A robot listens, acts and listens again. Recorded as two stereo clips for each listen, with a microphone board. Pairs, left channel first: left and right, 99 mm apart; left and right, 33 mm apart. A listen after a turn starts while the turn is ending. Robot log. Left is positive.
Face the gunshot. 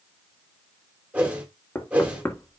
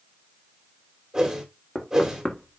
cmd idle
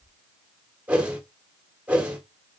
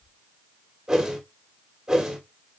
cmd idle
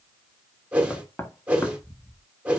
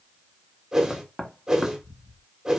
end: I can't make out a gunshot, only a whoosh and knocking.